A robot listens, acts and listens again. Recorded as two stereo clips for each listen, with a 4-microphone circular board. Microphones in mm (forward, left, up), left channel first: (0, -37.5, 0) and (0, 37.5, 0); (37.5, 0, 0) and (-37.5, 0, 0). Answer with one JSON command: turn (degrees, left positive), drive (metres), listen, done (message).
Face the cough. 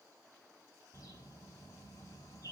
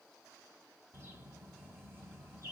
{"listen": true}
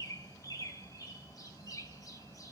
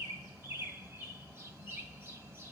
{"listen": true}
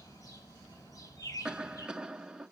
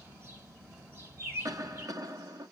{"turn": 165}
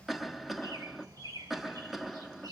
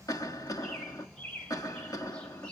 {"done": "Found it: a cough, straight ahead."}